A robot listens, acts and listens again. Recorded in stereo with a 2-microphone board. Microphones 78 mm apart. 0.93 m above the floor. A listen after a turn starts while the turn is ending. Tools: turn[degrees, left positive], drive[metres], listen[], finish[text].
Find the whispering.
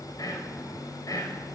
Thought: The whispering: about 50° left or 130° left.
Action: turn[50]
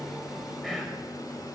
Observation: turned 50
Action: finish[Found it: whispering, straight ahead, over 4 m away.]